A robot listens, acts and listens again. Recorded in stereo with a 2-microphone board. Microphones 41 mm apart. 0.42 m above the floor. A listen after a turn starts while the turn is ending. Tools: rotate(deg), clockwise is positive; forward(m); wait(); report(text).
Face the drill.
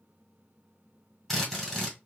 rotate(-30)
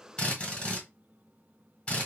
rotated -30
rotate(-150)
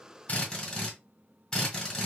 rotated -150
rotate(-20)
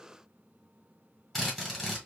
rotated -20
rotate(-10)
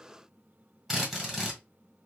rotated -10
report("Found it: a drill, straight ahead, 1 to 2 m away.")